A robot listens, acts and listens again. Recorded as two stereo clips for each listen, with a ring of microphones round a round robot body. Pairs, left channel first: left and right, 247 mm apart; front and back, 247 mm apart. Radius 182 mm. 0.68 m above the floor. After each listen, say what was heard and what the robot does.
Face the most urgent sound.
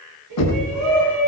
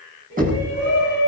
The shout: 125° right. Turn 125° right.
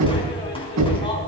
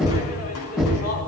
The shout is now 20° left. Turn 20° left.
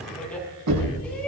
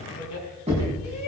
Found it: a shout, straight ahead, over 4 m away.